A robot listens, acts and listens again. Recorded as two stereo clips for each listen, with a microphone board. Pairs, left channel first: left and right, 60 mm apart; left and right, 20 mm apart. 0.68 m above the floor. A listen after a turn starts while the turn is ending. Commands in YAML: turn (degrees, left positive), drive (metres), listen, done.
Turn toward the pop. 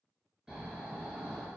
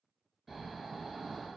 listen: true
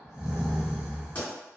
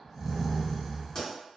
turn: 30
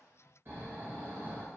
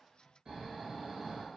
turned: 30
listen: true
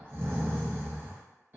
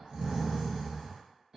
done: "I heard a pop, but can't make it out now. It was about straight ahead or 120° left."